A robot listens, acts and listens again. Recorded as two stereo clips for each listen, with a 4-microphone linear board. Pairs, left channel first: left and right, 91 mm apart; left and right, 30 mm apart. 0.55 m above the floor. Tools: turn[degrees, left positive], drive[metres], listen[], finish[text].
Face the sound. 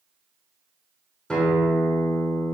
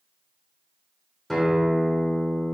Action: turn[30]
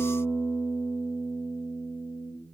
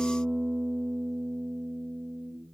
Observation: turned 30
Thought: So it is at 25° right.
Action: turn[-25]
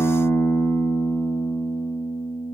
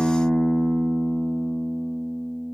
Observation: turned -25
Thought: The guitar is now 10° right.
Action: turn[-10]
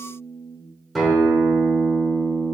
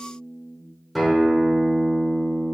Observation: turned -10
Action: finish[Facing the guitar.]